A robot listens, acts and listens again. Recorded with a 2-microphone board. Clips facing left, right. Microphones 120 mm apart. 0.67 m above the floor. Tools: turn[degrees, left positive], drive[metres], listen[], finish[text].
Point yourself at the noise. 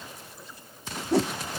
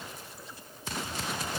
Action: turn[90]
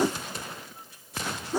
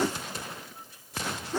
Thought: So it is at 10° left.
Action: turn[10]
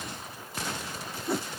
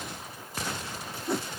Action: finish[Facing the whoosh.]